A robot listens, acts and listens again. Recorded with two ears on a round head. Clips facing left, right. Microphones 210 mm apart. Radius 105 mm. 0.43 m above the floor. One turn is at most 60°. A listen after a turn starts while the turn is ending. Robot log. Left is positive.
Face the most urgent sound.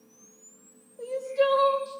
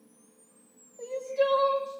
note: The crying: about 15° left or 165° left.
cmd yaw +15
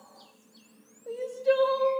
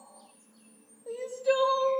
end: Facing the crying.